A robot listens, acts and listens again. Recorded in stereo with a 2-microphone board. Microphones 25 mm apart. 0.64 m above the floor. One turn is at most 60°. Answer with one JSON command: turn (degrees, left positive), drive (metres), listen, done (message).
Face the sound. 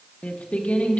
{"turn": 60}
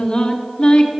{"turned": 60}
{"turn": 40}
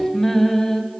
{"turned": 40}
{"turn": 20}
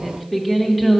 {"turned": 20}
{"done": "Facing the singing."}